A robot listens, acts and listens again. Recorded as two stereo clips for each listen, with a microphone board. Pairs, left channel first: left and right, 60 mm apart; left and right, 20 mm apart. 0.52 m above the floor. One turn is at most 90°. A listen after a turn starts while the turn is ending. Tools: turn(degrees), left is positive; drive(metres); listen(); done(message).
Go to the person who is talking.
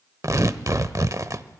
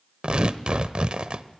listen()
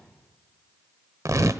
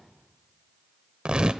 listen()
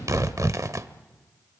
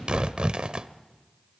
done("I can't make out anyone speaking, only tearing paper.")